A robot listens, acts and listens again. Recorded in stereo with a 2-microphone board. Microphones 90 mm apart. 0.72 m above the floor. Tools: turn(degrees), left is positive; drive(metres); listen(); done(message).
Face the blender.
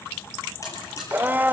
turn(degrees=-20)
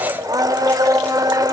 turn(degrees=-140)
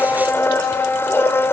turn(degrees=25)
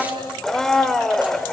done("Facing the blender.")